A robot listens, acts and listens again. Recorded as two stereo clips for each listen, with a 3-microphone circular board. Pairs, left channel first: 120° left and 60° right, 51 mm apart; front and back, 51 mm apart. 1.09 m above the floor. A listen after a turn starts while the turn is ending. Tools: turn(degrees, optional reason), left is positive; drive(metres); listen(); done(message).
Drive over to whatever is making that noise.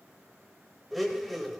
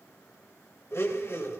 turn(degrees=30, reason="The blender: 30° left.")
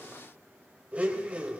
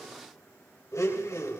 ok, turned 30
drive(metres=1.0)
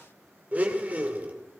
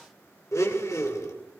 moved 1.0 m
drive(metres=1.0)
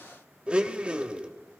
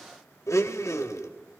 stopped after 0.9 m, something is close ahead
turn(degrees=10, reason="The blender is now 10° left.")
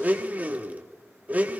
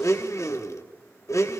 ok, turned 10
done("I am next to the blender.")